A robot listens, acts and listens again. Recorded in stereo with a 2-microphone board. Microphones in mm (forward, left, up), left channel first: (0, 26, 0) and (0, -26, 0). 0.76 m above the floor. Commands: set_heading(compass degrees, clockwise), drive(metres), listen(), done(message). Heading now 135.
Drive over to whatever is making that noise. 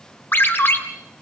set_heading(90)
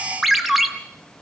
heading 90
drive(1.0)
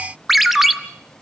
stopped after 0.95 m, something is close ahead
done("Arrived at the ringtone, straight ahead.")